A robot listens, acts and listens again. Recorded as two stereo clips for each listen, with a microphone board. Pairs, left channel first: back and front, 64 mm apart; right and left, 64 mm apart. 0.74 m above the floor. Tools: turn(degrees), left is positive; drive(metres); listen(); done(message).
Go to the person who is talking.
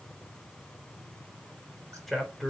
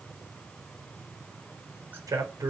turn(degrees=90)
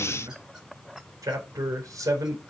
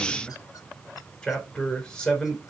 turn(degrees=-15)
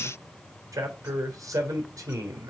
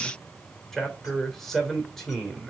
drive(metres=1.0)
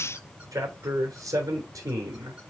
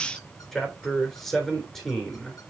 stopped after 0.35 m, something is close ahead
done("Blocked. The man speaking is further on, straight ahead.")